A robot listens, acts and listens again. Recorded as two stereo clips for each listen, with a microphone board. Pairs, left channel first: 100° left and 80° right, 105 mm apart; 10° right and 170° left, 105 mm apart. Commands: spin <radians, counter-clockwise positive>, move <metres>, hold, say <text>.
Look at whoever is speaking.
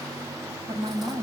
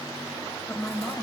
spin -1.40
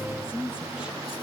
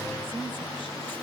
say Found it: a woman speaking, straight ahead.